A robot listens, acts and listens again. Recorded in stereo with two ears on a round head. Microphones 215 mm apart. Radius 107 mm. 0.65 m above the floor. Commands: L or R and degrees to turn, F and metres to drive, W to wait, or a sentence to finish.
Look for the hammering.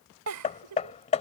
L30
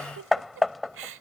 Found it: hammering, straight ahead.